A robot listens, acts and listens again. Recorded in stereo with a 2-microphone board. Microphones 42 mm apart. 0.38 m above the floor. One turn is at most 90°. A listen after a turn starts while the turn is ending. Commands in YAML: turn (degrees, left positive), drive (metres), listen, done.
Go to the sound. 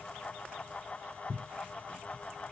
listen: true
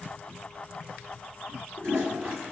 turn: -70
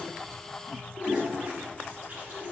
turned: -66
turn: -40
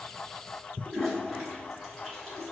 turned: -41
drive: 1.0
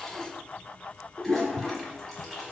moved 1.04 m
drive: 1.0
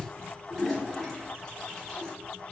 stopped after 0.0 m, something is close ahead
turn: 10
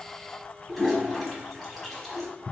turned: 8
done: "I am next to the toilet flushing."